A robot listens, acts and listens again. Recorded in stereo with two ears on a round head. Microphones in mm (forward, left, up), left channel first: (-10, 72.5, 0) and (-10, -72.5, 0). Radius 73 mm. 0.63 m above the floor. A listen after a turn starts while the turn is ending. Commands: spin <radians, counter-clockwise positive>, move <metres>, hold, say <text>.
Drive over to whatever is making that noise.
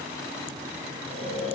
spin -0.70
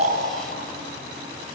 spin -1.75
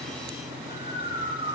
spin -0.52
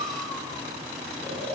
spin 0.17
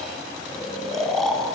move 1.0
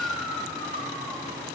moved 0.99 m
move 1.0
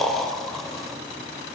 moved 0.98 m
move 1.0
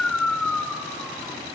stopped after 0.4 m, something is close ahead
say I am next to the snoring.